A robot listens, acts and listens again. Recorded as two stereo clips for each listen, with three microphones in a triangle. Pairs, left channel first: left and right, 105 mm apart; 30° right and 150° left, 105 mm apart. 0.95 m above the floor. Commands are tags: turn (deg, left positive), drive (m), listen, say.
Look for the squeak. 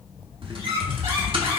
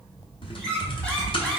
<turn deg="-110"/>
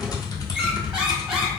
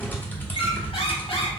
<listen/>
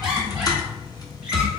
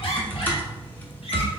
<listen/>
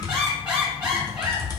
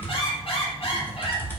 <turn deg="-10"/>
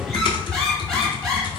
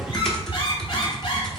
<say>Found it: a squeak, straight ahead.</say>